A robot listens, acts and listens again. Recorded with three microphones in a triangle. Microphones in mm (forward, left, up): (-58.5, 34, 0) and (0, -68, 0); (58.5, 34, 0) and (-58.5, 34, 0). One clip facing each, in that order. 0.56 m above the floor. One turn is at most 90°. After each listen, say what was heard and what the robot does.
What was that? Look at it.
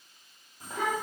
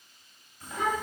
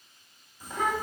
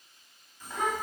The child speaking: 80° left. Turn 80° left.
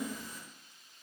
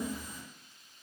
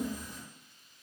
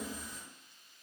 The child speaking is now 25° left. Turn 25° left.
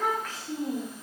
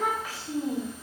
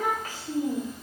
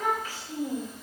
The child speaking is now 40° left. Turn 40° left.
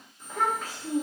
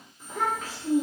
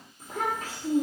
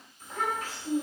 The child speaking is now 40° left. Turn 40° left.
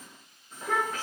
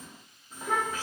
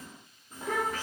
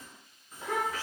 The child speaking is now 10° left. Turn 10° left.
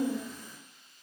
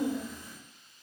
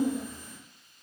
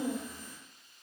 The child speaking is now 15° left. Turn 15° left.
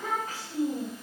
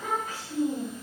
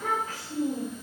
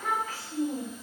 Facing the child speaking, 1 to 2 m away.